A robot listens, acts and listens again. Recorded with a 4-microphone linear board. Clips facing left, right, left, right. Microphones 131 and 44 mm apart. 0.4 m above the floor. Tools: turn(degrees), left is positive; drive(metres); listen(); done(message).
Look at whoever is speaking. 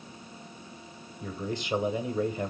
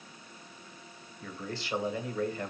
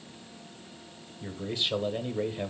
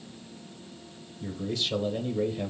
turn(degrees=20)
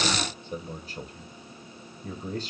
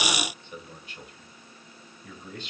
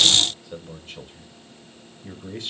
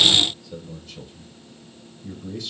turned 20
turn(degrees=135)
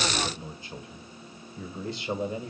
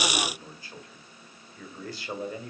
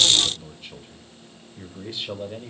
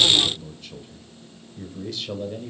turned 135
turn(degrees=25)
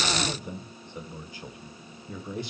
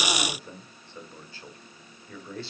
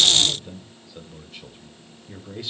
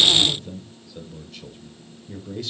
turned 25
turn(degrees=20)
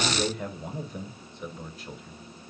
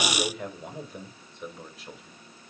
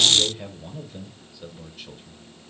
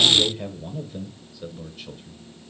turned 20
done("Facing the man speaking, 1 to 2 m away.")